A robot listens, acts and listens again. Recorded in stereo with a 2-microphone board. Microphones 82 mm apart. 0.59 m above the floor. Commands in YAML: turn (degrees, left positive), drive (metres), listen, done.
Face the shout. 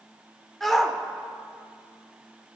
turn: 30
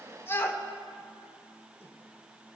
turn: 145
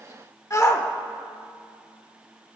turn: 45
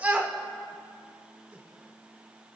turn: -20
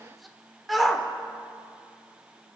done: "Found it: a shout, straight ahead."